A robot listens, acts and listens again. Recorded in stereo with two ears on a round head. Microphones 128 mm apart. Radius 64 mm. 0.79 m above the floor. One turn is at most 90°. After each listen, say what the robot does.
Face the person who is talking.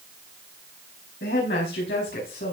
Turn 90° left.
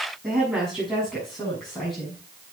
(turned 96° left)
Facing the woman speaking, over 4 m away.